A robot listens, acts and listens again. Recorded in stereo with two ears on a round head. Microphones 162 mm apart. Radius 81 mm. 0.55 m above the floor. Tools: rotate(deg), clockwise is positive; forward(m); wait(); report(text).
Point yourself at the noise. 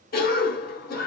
rotate(-50)
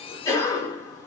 rotate(-25)
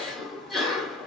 report("Facing the cough, 1 to 2 m away.")